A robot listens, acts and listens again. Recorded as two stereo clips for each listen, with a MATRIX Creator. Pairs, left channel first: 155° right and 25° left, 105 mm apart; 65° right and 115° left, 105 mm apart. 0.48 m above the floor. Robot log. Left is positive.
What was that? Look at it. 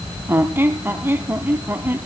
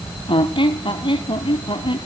note: The squeak: 45° right.
cmd yaw -45
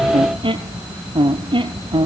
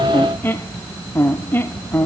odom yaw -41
end: Facing the squeak.